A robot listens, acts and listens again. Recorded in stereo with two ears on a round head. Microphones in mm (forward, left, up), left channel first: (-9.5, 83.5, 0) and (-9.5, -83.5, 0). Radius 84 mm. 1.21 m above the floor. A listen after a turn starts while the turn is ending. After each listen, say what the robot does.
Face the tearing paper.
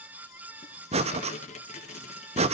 Turn 40° left.
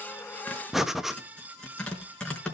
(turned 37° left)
Found it: tearing paper, straight ahead.